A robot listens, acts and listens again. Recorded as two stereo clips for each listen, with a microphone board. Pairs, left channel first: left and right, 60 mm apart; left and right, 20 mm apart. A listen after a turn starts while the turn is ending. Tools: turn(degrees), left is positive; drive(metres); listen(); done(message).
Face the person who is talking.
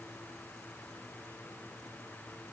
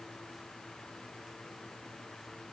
listen()
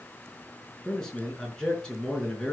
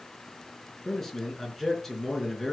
turn(degrees=30)
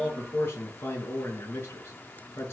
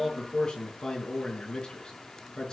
turn(degrees=140)
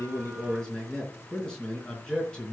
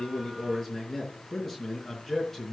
turn(degrees=15)
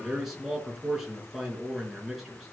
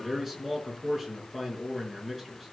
done("Facing the man speaking.")